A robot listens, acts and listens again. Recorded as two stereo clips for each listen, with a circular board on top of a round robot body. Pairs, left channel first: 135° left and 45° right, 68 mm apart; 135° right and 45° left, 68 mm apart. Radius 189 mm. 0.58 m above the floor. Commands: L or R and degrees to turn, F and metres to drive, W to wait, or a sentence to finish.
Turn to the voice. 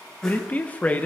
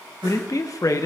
R160
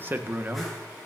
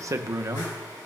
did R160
L10
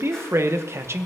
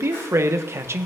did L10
Found it: a man speaking, straight ahead, 1 to 2 m away.